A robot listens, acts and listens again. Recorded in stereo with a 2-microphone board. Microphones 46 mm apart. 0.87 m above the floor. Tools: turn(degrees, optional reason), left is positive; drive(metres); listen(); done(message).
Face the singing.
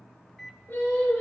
turn(degrees=60, reason="The singing: about 60° left or 120° left.")
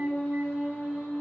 turn(degrees=55, reason="So it is at 55° left.")
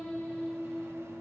done("Found it: singing, straight ahead, over 4 m away.")